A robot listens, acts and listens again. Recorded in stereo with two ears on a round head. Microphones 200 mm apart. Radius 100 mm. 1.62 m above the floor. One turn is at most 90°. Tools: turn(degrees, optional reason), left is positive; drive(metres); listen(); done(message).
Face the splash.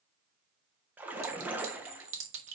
turn(degrees=-30)
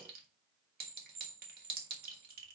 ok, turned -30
listen()
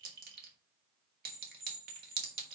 done("I heard a splash, but can't make it out now. It was about 20° left or 140° right.")